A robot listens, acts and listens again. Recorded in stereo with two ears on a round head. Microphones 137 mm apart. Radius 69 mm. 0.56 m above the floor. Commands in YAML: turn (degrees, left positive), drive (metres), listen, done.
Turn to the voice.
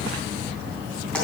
listen: true
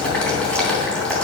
listen: true
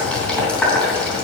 done: "I can't make out anyone speaking to turn to."